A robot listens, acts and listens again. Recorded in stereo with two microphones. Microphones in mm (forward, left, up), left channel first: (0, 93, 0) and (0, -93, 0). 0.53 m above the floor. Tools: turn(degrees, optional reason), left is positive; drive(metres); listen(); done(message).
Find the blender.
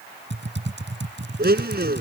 turn(degrees=-60, reason="The blender: about 60° right or 120° right.")
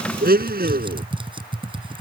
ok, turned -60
turn(degrees=-60, reason="So it is at 60° right.")
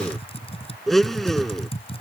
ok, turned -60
done("Found it: a blender, straight ahead.")